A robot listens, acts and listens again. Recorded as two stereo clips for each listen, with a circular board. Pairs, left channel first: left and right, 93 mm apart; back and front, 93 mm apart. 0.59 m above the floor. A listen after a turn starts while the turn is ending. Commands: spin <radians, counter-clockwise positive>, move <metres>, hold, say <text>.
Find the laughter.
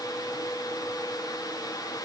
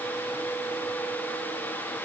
hold
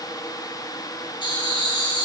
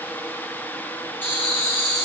spin 1.92
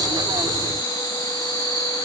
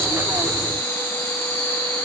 spin 0.61
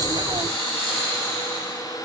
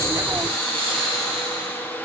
say Facing the laughter.